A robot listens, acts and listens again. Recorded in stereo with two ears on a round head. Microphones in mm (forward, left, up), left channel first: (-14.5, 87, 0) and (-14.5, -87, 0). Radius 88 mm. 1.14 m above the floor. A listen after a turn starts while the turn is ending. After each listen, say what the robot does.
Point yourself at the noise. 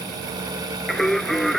Turn 30° left.
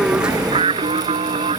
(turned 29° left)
Turn 30° right.
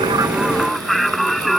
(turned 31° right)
Facing the singing.